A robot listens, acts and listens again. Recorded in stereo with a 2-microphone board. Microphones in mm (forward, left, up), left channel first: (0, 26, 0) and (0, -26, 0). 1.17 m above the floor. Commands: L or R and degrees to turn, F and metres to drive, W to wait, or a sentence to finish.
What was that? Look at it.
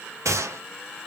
R75
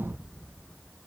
W
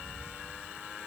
I heard a gunshot, but can't make it out now. It was about straight ahead or 30° right.